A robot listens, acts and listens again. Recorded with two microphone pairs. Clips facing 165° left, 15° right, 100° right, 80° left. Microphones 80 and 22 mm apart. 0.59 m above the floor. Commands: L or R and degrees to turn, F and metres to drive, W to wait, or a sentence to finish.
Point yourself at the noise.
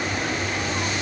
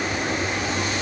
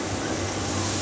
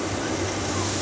W
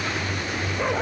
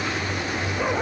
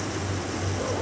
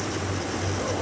W
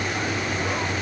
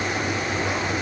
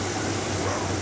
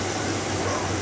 I can't make out anything to turn to.